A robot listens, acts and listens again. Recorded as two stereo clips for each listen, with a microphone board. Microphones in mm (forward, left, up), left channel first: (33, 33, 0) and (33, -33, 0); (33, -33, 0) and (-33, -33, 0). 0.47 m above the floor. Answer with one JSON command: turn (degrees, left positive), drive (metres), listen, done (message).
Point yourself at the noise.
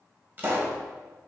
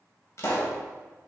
{"turn": -35}
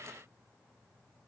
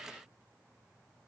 {"done": "Facing where the pop came from. I can't hear it now."}